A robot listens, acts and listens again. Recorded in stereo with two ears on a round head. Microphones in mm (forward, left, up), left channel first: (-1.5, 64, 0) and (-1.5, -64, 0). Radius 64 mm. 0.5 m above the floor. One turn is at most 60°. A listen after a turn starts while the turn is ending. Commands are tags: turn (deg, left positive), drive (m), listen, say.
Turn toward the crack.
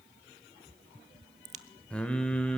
<turn deg="-50"/>
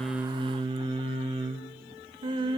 <listen/>
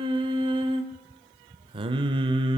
<say>I heard a crack, but can't make it out now. It was about straight ahead or 80° right.</say>